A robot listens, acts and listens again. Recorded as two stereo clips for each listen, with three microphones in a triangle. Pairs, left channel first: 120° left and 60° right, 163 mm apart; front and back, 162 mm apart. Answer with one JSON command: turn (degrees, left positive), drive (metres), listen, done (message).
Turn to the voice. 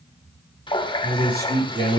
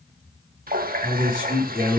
{"turn": -60}
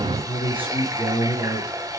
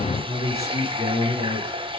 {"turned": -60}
{"done": "Facing the man speaking, over 4 m away."}